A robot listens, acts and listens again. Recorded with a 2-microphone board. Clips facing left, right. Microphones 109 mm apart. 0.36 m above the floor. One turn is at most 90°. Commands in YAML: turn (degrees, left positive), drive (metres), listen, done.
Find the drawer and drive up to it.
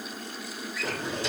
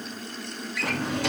turn: -55
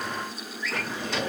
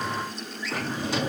drive: 1.0
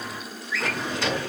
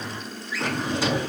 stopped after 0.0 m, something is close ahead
done: "Something is in my way. I am facing the drawer but have not reached it."